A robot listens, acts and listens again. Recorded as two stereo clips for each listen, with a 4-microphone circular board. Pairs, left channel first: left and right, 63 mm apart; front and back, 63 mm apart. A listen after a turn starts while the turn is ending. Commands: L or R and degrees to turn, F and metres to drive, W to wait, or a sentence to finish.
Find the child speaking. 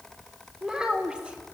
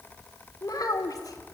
R15
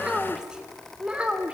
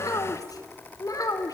R20
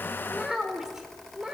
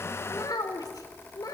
R10
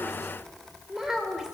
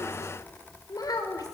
R10
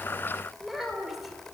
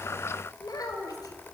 Found it: a child speaking, straight ahead, over 4 m away.